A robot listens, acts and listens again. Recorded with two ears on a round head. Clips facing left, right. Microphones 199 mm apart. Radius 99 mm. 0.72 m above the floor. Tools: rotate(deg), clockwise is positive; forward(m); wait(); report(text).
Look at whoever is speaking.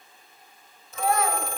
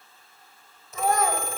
rotate(40)
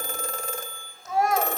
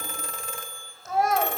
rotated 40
report("Found it: a child speaking, straight ahead.")